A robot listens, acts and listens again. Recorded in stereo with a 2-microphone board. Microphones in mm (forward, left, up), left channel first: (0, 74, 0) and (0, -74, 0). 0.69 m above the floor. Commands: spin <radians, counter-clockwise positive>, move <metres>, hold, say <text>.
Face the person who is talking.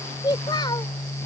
spin 0.52
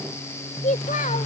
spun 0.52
spin 2.09
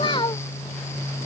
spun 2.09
spin 0.61
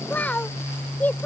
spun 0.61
spin 0.17
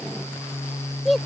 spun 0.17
say Facing the child speaking.